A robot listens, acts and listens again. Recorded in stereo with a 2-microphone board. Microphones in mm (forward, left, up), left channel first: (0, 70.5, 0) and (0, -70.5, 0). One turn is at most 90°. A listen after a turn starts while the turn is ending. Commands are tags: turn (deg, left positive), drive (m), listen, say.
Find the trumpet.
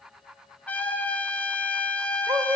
<turn deg="30"/>
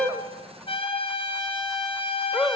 <turn deg="90"/>
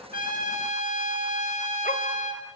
<turn deg="65"/>
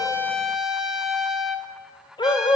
<say>Found it: a trumpet, straight ahead.</say>